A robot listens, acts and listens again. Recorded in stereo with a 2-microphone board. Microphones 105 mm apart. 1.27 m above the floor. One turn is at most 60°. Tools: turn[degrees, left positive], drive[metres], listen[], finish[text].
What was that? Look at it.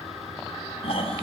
Thought: The snoring: about 65° left or 115° left.
Action: turn[60]
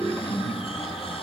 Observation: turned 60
Thought: So it is at 60° left.
Action: turn[60]
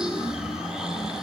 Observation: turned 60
Action: finish[Found it: snoring, straight ahead, over 4 m away.]